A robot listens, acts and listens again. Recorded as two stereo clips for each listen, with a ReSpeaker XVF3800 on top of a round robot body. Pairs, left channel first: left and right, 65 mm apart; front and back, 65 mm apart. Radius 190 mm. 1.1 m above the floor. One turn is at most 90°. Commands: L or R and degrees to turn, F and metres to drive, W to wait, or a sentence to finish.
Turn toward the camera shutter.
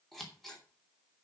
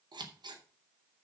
W
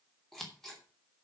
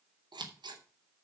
W
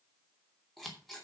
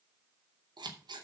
I can't make out a camera shutter, only scissors.